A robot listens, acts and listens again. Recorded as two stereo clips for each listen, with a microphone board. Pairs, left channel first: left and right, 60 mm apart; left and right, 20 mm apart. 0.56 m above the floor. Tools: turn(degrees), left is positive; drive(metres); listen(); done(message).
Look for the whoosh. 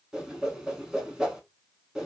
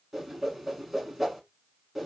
turn(degrees=-30)
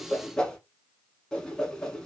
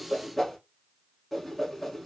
turn(degrees=15)
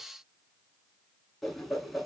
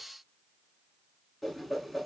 done("Facing the whoosh, under 1 m away.")